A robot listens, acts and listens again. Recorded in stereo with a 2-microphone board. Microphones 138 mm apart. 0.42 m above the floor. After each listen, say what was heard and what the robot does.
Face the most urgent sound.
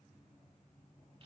Keep listening.
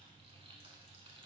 Keep listening.
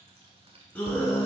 Turn 30° left.
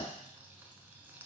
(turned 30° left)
Keep listening.
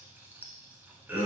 So it is at 20° right. Turn 20° right.
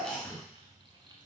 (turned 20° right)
Facing the scream.